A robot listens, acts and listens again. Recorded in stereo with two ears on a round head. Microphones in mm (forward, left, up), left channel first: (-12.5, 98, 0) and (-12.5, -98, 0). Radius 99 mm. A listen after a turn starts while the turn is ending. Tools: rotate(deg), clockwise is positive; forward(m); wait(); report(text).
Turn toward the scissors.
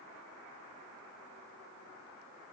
wait()
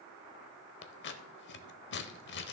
rotate(-55)
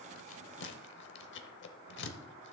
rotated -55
rotate(-60)
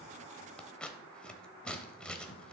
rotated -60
report("Found it: scissors, straight ahead.")